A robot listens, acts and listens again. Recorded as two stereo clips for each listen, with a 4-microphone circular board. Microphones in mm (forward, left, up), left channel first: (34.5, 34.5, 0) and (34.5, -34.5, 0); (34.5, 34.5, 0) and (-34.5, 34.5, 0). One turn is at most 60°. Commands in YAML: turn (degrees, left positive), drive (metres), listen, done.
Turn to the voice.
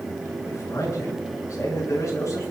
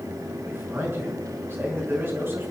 turn: 60
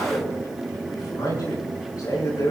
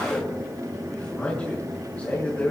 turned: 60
turn: 60
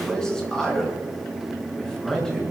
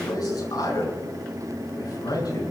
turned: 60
turn: 10
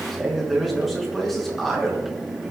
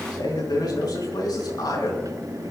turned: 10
done: "Facing the man speaking."